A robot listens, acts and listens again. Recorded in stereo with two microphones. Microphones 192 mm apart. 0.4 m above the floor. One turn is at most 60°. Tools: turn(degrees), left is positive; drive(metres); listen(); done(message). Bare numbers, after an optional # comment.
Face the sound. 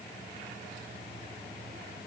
listen()
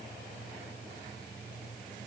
listen()
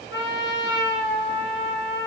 turn(60)
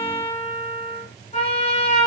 # So it is at 35° left.
turn(35)
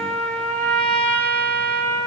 done("Found it: a trumpet, straight ahead.")